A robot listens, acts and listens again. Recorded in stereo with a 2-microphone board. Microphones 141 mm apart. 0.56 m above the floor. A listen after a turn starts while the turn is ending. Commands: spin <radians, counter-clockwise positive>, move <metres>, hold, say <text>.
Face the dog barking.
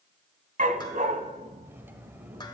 spin -1.22
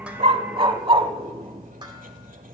spin -0.70
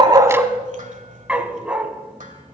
spin -0.17
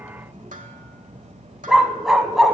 say Facing the dog barking, 1 to 2 m away.